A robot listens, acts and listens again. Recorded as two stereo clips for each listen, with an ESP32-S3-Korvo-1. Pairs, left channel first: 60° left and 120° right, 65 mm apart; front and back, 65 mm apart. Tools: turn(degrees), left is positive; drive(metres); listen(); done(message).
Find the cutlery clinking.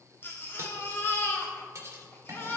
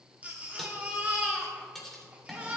turn(degrees=-85)
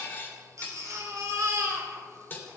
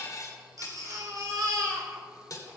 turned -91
done("Found it: cutlery clinking, straight ahead.")